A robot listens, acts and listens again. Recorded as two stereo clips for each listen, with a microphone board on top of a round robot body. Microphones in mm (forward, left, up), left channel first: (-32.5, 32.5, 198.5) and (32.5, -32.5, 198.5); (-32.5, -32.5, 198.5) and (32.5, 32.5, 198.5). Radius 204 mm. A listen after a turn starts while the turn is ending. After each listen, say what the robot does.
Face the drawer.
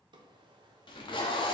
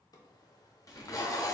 Turn 85° right.
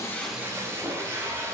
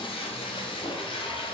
Keep listening.
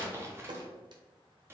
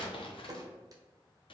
Found it: a drawer, straight ahead.